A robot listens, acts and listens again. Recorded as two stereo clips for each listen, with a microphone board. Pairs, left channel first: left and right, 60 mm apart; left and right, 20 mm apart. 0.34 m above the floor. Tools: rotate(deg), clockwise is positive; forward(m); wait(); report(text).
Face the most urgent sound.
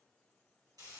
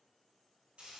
wait()
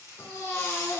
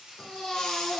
rotate(-50)
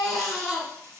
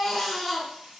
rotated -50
report("Found it: a baby crying, straight ahead, 1 to 2 m away.")